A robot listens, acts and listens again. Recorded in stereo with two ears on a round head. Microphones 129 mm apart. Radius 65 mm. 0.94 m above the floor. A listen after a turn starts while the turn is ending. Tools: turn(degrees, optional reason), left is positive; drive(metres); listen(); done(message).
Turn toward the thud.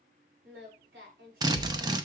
turn(degrees=-30)
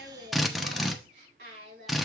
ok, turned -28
listen()
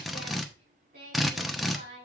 done("I heard a thud, but can't make it out now. It was about 20° left or 145° right.")